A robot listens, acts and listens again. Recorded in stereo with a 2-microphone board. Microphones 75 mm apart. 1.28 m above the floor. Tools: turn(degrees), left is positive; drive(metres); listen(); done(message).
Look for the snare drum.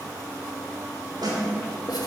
turn(degrees=-70)
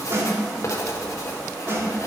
turn(degrees=-35)
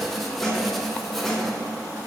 done("Facing the snare drum.")